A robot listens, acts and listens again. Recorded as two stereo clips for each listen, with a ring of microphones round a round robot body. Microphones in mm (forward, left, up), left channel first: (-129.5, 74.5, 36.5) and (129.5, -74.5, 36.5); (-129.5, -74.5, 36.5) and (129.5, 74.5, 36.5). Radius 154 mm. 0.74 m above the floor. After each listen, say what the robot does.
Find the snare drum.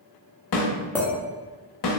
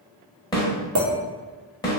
Turn 135° left.
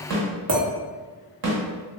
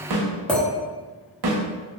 Found it: a snare drum, straight ahead.